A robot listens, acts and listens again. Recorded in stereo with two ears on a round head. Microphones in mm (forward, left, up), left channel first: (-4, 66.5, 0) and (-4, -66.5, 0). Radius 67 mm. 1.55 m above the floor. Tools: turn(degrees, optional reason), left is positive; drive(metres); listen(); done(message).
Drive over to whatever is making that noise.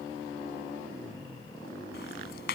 turn(degrees=75, reason="The ticking: about 75° left or 105° left.")
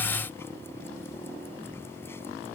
listen()
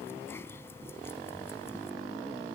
listen()
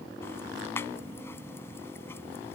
turn(degrees=15, reason="So it is at 15° left.")
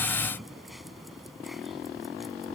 drive(metres=1.0)
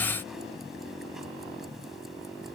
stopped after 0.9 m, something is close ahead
listen()
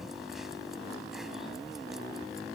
done("Something is in my way. I am facing the ticking but have not reached it.")